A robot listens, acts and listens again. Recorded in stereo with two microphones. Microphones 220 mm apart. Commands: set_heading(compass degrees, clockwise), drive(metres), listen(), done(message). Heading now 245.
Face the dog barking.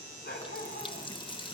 set_heading(205)
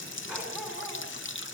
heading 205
listen()
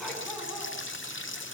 listen()
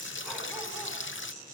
done("I heard a dog barking, but can't make it out now. It was about straight ahead or 100° left.")